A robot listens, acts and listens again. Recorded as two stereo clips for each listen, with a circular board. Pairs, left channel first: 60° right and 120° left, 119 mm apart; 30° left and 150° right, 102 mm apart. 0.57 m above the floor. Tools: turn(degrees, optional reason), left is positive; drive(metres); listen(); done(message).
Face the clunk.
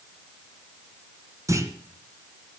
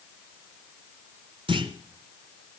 turn(degrees=180, reason="The clunk: straight behind.")
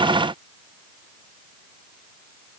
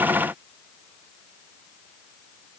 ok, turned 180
done("I heard a clunk from this way, but can't make it out now.")